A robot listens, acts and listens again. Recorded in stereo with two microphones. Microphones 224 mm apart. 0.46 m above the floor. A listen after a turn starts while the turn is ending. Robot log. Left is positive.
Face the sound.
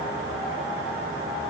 cmd idle
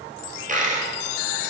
note: The dropped coin: about 35° right or 145° right.
cmd yaw -35
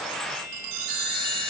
cmd idle
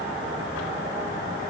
end: I heard a dropped coin, but can't make it out now. It was about straight ahead or 110° right.